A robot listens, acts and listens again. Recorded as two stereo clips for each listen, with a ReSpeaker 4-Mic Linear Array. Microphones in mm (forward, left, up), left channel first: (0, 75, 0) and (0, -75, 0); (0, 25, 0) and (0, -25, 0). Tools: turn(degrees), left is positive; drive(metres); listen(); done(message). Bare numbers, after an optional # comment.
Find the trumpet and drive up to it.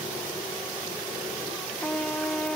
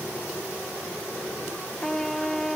turn(30)
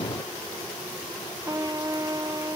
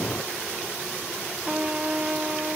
# So it is at 25° right.
turn(-25)
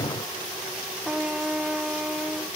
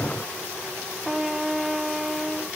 drive(1.0)
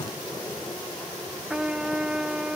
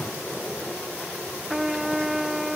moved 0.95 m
drive(1.0)
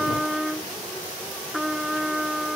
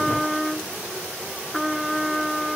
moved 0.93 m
drive(1.0)
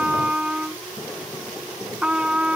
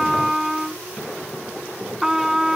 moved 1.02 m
drive(1.0)
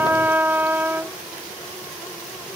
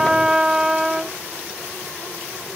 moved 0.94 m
# The trumpet is now 15° right.
turn(-15)
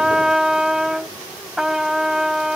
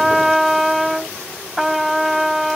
drive(1.0)
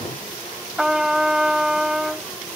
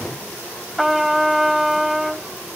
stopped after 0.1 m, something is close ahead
done("Arrived at the trumpet, straight ahead.")